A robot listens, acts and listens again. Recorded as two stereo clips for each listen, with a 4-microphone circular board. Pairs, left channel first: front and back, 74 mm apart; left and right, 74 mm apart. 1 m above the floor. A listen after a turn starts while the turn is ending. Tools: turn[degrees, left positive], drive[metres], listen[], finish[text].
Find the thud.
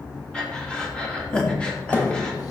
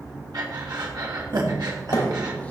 Thought: The thud: 60° left.
Action: turn[60]
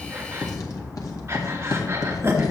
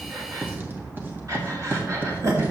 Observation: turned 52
Thought: Nothing new. It was at 10° left.
Action: turn[10]
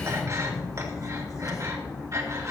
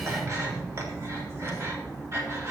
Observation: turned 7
Action: finish[Facing where the thud came from. I can't hear it now.]